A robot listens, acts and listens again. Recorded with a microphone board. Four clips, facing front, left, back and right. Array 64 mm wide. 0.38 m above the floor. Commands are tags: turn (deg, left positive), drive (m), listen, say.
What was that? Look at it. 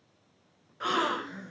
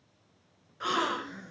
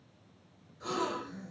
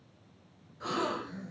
<turn deg="30"/>
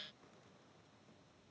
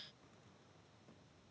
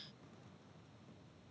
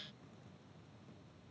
<say>Facing where the gasp came from. I can't hear it now.</say>